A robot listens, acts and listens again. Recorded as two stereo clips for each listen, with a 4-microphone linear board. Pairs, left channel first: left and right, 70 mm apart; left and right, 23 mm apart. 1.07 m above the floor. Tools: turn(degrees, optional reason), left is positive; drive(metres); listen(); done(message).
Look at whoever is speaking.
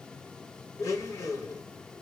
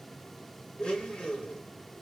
listen()
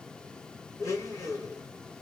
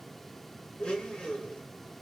listen()
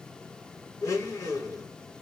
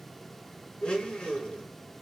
done("I can't make out anyone speaking, only a blender.")